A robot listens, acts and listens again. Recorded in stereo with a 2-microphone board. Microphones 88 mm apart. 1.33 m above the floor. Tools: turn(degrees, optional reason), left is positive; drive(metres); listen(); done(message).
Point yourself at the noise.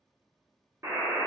turn(degrees=-30, reason="The buzzer: about 30° right or 150° right.")
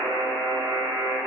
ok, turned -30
turn(degrees=-120, reason="So it is at 120° right.")
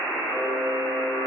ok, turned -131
turn(degrees=10, reason="The buzzer is now 10° left.")
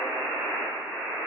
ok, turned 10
done("Found it: a buzzer, straight ahead, under 1 m away.")